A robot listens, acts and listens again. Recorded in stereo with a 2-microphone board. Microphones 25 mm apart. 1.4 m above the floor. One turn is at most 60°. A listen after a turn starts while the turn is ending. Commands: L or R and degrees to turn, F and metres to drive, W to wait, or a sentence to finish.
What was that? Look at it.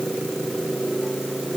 W
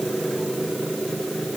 W
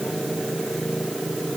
I can't make out anything to turn to.